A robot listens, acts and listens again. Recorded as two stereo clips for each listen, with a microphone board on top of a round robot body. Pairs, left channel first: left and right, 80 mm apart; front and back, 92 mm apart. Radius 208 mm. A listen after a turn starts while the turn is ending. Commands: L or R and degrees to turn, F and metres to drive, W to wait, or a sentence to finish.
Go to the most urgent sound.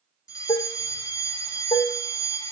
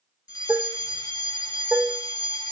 L45
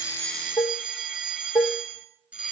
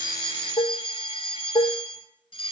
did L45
R15
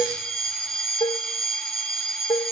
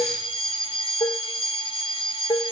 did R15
F1.0
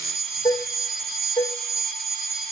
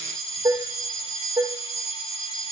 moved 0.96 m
F1.0
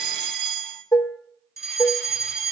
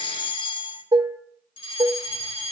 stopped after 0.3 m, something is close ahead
Blocked. The fire alarm is further on, straight ahead.